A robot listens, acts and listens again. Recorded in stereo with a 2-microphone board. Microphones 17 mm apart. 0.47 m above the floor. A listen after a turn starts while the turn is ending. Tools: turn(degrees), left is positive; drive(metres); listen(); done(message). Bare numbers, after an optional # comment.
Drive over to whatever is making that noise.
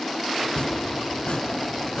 # The chopping: about 70° left or 110° left.
turn(70)
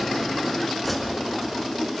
drive(1.0)
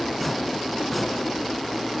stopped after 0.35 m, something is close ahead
done("Something is in my way. I am facing the chopping but have not reached it.")